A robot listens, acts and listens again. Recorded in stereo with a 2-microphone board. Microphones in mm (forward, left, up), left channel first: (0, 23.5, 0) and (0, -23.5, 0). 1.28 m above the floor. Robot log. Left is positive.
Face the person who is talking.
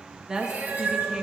note: The woman speaking: about 15° right or 165° right.
cmd yaw -15
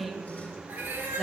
end: Found it: a woman speaking, straight ahead.